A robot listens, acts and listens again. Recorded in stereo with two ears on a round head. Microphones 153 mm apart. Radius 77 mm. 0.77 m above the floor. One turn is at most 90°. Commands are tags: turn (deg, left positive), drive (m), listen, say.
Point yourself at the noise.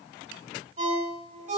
<turn deg="-50"/>
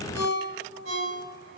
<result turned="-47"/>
<turn deg="-85"/>
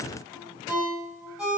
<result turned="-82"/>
<say>Found it: a ringtone, straight ahead.</say>